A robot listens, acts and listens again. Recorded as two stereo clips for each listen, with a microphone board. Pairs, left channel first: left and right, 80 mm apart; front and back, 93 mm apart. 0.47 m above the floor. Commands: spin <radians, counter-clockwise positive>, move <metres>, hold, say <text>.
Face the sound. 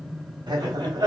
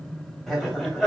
spin -1.66
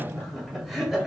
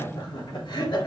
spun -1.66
say Facing the laughter, 2 to 4 m away.